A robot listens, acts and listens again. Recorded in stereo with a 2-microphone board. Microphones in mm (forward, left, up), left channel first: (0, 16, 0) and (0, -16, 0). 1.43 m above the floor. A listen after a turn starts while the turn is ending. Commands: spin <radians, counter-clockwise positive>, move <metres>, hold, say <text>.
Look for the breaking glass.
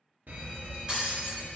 spin -0.44
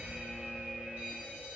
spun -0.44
hold
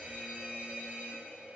say I heard breaking glass, but can't make it out now. It was about straight ahead or 130° right.